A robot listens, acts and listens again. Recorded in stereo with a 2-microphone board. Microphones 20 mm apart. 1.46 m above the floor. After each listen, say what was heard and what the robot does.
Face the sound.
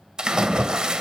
The splash: about 55° right or 125° right. Turn 55° right.
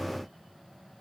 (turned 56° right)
Keep listening.
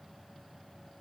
I heard a splash, but can't make it out now. It was about 5° left or 70° right.